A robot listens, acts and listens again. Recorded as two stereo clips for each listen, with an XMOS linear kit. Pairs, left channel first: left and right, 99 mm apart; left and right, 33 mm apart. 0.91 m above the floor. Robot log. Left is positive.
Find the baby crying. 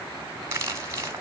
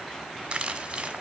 cmd idle
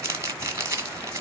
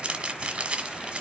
cmd idle
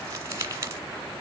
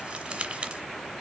end: I can't make out a baby crying to turn to.